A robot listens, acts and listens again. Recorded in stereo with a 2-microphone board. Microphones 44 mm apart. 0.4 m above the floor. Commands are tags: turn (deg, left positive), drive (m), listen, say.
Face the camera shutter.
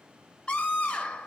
<listen/>
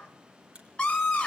<turn deg="-25"/>
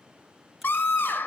<listen/>
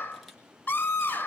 <listen/>
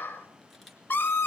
<say>I heard a camera shutter, but can't make it out now. It was about straight ahead or 130° right.</say>